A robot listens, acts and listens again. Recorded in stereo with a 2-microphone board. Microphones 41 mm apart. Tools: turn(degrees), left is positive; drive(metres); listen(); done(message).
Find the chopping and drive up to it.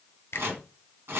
turn(degrees=-75)
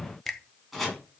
drive(metres=1.0)
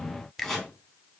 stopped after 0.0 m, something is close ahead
done("Something is in my way. I am facing the chopping but have not reached it.")